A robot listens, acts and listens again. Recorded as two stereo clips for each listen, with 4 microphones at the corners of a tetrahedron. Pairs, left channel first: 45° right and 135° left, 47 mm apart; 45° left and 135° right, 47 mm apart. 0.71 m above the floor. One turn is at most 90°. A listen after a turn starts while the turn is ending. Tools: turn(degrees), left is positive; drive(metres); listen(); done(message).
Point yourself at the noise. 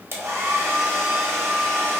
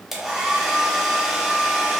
turn(degrees=90)
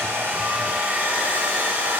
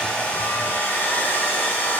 turn(degrees=85)
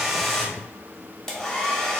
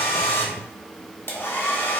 turn(degrees=30)
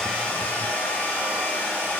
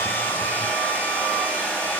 done("Facing the hair dryer, under 1 m away.")